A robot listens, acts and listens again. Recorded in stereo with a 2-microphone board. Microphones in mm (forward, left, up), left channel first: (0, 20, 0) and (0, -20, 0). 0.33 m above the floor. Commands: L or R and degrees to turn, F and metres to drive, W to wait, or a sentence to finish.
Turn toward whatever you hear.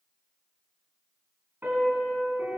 R60
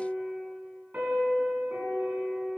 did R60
R55
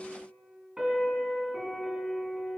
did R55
R20
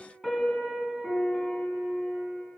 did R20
Found it: a piano, straight ahead, 2 to 4 m away.